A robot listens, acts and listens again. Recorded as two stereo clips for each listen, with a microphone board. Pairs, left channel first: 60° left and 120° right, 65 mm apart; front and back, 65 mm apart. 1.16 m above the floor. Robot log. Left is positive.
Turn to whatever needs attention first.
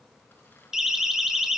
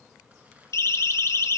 note: The siren: 35° right.
cmd yaw -35
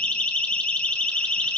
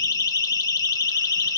note: The siren is now 10° right.
cmd yaw -10
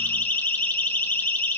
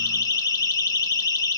end: Found it: a siren, straight ahead, 2 to 4 m away.